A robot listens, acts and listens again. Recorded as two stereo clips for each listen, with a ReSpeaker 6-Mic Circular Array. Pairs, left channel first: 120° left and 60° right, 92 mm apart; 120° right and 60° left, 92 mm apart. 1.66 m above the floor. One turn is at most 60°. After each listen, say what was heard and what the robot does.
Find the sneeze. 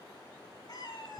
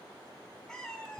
Keep listening.
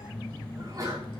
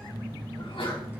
The sneeze: 110° right. Turn 60° right.
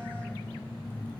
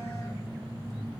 Nothing new. It was at 50° right. Turn 50° right.
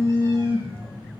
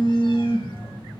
Facing where the sneeze came from. I can't hear it now.